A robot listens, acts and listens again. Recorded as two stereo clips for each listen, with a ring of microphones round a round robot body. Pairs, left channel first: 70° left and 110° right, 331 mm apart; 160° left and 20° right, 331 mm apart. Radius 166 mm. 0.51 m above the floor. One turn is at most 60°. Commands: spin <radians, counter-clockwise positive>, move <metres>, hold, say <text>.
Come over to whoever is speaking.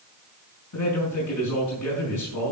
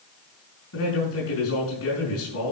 spin 1.05
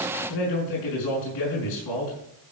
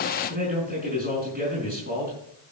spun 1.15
spin 0.70
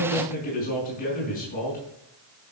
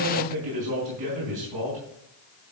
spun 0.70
move 1.0
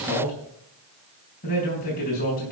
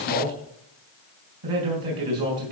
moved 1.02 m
move 1.0
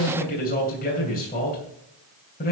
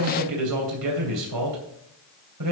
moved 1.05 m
move 1.0
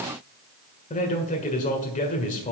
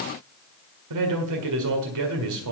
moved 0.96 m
move 1.0
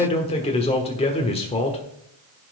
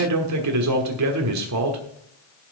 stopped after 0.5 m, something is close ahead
say Arrived at the man speaking, straight ahead.